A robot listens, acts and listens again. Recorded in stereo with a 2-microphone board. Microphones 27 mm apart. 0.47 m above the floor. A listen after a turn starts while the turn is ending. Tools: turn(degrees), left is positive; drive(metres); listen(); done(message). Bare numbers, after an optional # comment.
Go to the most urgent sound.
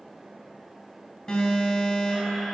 # The alarm: about 40° left or 140° left.
turn(40)
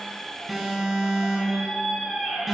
drive(1.0)
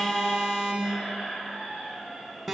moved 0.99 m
drive(1.0)
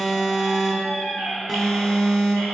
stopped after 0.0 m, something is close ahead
# The alarm is now 10° left.
turn(10)
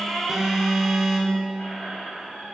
done("I am next to the alarm.")